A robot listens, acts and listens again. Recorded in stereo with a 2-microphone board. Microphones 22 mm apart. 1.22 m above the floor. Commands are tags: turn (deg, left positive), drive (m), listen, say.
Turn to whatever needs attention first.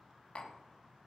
<listen/>
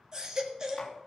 <turn deg="-25"/>
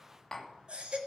<turn deg="-130"/>
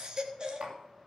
<turn deg="-40"/>
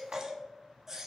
<turn deg="-20"/>
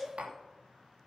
<say>Facing the baby crying.</say>